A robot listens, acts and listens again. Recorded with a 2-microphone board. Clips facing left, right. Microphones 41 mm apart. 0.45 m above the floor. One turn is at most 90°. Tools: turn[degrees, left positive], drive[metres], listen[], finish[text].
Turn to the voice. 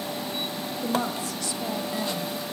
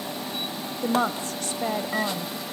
Thought: The woman speaking: about 45° right or 135° right.
Action: turn[-45]
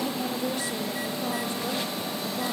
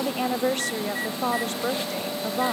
Thought: So it is at 80° right.
Action: turn[-80]
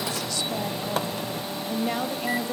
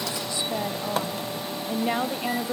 Thought: The woman speaking is now 20° right.
Action: turn[-20]
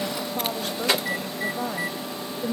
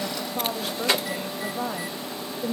Action: finish[Facing the woman speaking, 1 to 2 m away.]